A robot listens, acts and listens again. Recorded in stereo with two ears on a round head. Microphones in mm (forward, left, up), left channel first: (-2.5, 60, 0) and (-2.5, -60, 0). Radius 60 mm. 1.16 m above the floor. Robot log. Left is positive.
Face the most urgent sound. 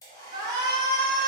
note: The shout: about 30° right or 150° right.
cmd yaw -30
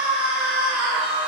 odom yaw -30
note: So it is at 10° right.
cmd yaw -10
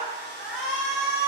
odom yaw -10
end: Facing the shout, under 1 m away.